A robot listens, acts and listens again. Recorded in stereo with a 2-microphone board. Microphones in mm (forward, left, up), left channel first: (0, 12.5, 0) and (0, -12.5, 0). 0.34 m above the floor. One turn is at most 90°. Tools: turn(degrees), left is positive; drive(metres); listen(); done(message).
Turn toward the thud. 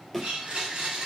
turn(degrees=30)
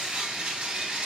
listen()
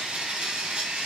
done("I heard a thud, but can't make it out now. It was about 20° right or 140° left.")